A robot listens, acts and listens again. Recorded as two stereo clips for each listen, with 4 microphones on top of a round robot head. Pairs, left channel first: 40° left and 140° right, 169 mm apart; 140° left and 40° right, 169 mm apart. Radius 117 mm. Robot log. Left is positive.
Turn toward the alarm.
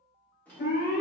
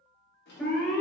note: The alarm: 65° left.
cmd yaw +65
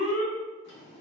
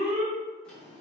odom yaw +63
end: Facing the alarm, 2 to 4 m away.